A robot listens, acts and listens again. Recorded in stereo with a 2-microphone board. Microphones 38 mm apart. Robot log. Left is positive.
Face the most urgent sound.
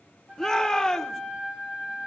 note: The shout: about 15° left or 165° left.
cmd yaw +15
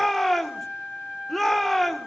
end: Facing the shout, 1 to 2 m away.